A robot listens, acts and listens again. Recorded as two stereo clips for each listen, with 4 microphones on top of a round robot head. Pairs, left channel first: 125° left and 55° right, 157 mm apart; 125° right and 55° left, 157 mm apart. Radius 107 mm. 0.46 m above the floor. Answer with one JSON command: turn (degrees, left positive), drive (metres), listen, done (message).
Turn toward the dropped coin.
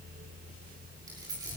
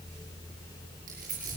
{"turn": 15}
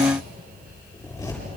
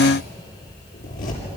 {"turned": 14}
{"done": "I heard a dropped coin from this way, but can't make it out now."}